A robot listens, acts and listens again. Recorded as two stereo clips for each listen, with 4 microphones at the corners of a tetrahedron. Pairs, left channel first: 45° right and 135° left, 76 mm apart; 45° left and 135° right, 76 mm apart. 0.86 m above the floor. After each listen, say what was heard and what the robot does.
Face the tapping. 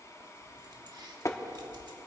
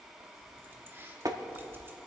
The tapping: 95° right. Turn 95° right.
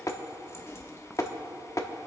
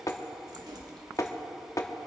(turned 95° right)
Found it: tapping, straight ahead, 1 to 2 m away.